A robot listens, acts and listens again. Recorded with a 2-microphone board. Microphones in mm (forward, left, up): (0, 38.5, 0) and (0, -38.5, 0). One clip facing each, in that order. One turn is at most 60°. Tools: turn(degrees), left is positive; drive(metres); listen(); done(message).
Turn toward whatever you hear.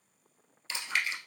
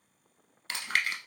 turn(degrees=-60)
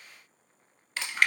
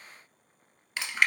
done("Found it: chewing, straight ahead.")